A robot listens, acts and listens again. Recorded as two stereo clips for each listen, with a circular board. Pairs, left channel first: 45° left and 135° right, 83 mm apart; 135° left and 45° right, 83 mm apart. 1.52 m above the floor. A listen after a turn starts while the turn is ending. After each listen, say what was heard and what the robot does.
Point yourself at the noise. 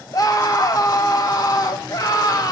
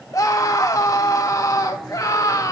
The scream: 85° left. Turn 85° left.
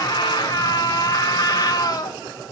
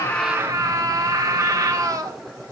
Found it: a scream, straight ahead.